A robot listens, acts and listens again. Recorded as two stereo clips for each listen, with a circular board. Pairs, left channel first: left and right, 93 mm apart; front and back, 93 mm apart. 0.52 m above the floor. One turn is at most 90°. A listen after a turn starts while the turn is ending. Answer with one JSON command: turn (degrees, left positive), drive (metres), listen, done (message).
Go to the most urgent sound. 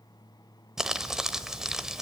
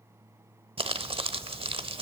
{"listen": true}
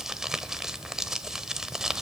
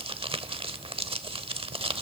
{"listen": true}
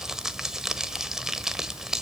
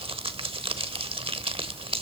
{"done": "I can't make out anything urgent, only crumpling."}